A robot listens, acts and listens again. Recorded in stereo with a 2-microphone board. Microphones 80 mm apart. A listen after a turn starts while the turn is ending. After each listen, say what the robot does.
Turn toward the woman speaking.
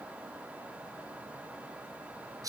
Keep listening.
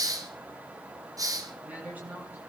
Turn 20° right.
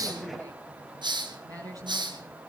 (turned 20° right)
Turn 135° right.
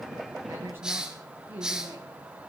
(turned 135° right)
Turn 30° right.
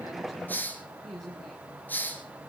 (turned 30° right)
Facing the woman speaking, over 4 m away.